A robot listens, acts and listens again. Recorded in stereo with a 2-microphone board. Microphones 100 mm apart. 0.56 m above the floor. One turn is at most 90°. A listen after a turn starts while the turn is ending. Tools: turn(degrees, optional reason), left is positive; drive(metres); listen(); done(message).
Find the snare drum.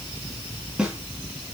turn(degrees=-30)
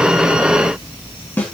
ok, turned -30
turn(degrees=20, reason="So it is at 20° left.")
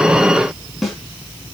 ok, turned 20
done("Facing the snare drum.")